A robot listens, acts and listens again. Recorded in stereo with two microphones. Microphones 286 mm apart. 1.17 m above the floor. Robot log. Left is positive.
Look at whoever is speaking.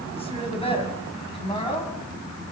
note: The woman speaking: about 20° left or 160° left.
cmd yaw +20
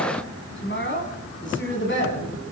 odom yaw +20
note: The woman speaking: about 40° left or 140° left.
cmd yaw +40
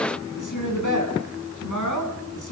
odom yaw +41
note: So it is at 100° left.
cmd yaw +100
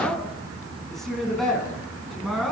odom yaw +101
end: Facing the woman speaking.